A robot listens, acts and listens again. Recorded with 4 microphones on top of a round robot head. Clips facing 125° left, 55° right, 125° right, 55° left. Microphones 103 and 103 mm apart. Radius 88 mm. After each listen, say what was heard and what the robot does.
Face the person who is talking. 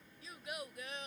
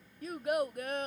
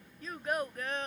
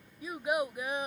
The child speaking: 25° right. Turn 25° right.
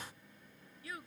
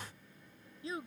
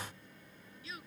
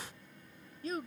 The child speaking is now 10° left. Turn 10° left.
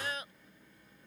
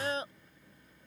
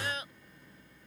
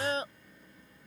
Found it: a child speaking, straight ahead.